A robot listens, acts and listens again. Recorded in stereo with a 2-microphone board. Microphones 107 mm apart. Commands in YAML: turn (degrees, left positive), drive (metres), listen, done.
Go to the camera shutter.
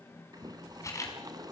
turn: 30
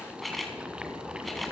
drive: 1.0
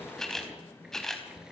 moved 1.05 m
drive: 1.0
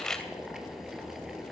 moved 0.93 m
drive: 1.0
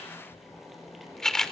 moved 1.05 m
drive: 1.0
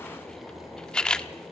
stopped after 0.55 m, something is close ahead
done: "I am next to the camera shutter."